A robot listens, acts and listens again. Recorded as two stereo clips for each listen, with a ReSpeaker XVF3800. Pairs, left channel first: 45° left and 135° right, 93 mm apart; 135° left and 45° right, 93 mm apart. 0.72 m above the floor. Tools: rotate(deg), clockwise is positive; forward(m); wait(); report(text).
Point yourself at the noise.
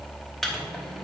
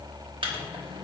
wait()
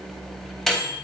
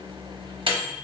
rotate(40)
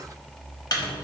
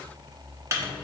rotate(-10)
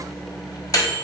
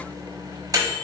report("Found it: a microwave, straight ahead, under 1 m away.")